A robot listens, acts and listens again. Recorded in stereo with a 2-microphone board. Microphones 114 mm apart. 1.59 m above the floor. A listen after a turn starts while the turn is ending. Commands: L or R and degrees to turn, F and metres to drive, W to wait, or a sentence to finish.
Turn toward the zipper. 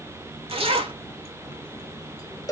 R60
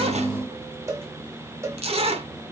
R60
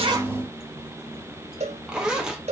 Found it: a zipper, straight ahead, under 1 m away.